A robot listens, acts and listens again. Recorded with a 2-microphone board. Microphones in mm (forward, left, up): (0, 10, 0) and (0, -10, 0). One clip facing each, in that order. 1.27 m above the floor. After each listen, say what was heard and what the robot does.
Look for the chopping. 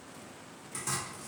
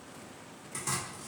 Turn 30° left.
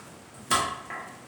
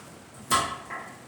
So it is at 155° left. Turn 155° left.
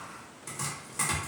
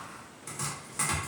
Found it: chopping, straight ahead.